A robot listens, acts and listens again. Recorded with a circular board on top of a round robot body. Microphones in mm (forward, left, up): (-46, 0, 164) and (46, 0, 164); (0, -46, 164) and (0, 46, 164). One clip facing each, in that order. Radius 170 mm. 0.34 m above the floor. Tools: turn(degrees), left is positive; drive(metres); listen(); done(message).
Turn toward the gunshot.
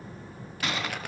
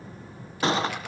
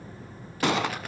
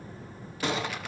turn(degrees=-60)
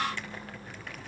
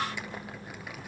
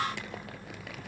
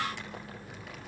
done("Facing where the gunshot came from. I can't hear it now.")